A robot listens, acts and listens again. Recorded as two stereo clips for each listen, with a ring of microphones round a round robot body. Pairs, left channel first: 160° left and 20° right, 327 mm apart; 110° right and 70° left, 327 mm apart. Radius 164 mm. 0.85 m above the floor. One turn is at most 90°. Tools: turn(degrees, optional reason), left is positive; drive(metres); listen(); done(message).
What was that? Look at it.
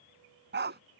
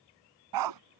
turn(degrees=40, reason="The dog barking: 40° left.")
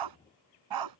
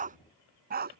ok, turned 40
done("Facing the dog barking.")